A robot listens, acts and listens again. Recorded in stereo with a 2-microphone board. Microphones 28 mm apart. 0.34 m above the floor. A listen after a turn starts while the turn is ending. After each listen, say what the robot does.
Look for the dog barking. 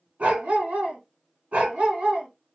Turn 55° right.
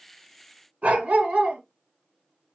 Turn 65° right.
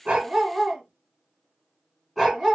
Found it: a dog barking, straight ahead, 1 to 2 m away.